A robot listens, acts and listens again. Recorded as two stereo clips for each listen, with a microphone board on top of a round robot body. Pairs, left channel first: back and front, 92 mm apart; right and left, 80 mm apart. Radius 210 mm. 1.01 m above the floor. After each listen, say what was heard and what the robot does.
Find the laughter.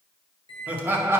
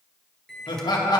The laughter: 65° right. Turn 65° right.
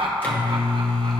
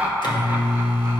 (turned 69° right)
The laughter is now 25° left. Turn 25° left.
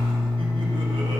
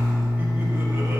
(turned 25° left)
Keep listening.
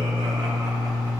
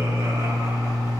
Keep listening.
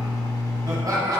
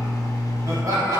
The laughter is now 50° left. Turn 50° left.
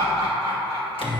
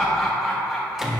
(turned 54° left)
Facing the laughter, 2 to 4 m away.